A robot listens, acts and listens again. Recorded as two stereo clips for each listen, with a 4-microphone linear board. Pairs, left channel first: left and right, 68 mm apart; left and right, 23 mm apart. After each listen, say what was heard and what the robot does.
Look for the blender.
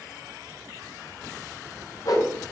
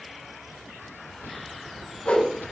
Keep listening.
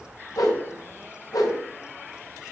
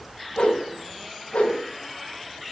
Keep listening.
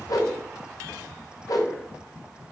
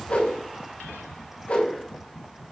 I can't make out a blender to turn to.